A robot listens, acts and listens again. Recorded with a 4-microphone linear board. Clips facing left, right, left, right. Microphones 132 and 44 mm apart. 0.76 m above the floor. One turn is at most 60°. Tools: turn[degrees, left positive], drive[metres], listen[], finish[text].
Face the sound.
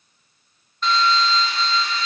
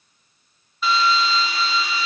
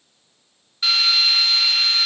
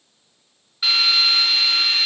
Action: turn[-30]
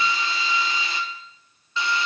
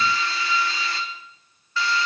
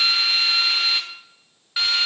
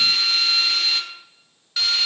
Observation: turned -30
Thought: So it is at 25° left.
Action: turn[25]
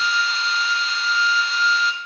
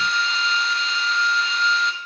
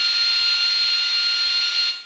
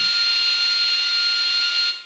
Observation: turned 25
Action: finish[Found it: a drill, straight ahead, 1 to 2 m away.]